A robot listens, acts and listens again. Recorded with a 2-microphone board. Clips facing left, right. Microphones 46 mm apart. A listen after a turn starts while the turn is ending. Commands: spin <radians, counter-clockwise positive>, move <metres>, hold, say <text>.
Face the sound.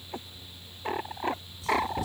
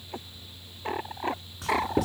spin -1.22
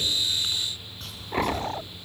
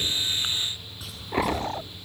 say Found it: writing, straight ahead.